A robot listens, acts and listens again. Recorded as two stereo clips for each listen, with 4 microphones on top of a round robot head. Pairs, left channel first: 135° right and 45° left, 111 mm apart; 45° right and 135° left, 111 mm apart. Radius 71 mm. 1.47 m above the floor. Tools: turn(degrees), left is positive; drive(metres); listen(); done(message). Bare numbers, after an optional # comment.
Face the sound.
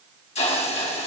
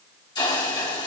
# The hiss: 100° right.
turn(-100)
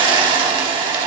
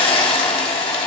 done("Found it: a hiss, straight ahead, 1 to 2 m away.")